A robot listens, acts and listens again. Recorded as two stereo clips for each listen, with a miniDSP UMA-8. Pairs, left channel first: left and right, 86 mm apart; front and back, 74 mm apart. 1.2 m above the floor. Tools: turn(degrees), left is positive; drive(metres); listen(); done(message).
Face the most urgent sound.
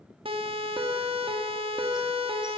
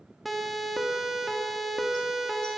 turn(degrees=-90)
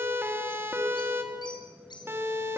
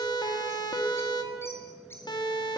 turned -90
turn(degrees=-25)
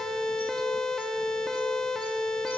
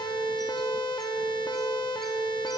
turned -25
done("Facing the siren.")